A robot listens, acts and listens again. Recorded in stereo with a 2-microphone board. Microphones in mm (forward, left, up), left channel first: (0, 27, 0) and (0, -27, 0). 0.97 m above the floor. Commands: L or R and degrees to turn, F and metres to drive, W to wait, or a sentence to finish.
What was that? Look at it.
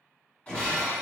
L25
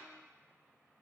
W
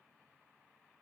I heard breaking glass, but can't make it out now. It was about straight ahead or 130° left.